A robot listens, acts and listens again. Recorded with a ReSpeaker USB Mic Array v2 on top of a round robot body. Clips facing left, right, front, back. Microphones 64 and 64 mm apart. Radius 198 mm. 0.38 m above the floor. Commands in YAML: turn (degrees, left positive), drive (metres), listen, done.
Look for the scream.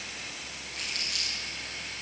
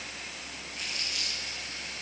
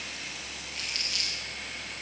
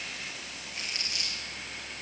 listen: true
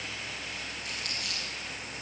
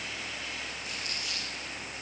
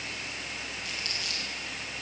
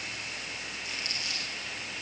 listen: true
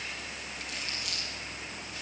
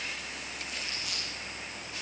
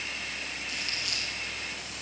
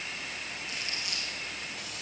done: "I can't make out a scream to turn to."